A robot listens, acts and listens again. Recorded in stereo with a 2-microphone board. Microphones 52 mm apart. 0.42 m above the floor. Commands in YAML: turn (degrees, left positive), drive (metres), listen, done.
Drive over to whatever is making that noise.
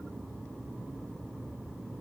listen: true
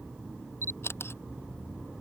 turn: 55
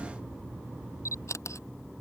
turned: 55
turn: 75
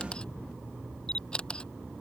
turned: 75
turn: 20
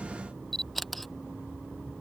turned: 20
drive: 1.0
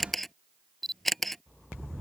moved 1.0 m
drive: 1.0
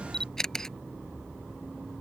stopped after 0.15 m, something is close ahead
turn: 10
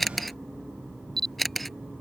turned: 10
done: "Arrived at the camera shutter, straight ahead."